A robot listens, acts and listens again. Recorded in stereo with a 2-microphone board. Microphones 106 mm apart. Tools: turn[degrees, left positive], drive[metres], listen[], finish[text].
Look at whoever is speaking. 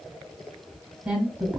Action: turn[-30]
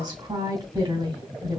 Thought: So it is at 135° right.
Action: turn[-135]
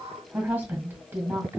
Thought: The woman speaking is now 15° right.
Action: turn[-15]
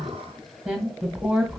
Action: finish[Facing the woman speaking, 2 to 4 m away.]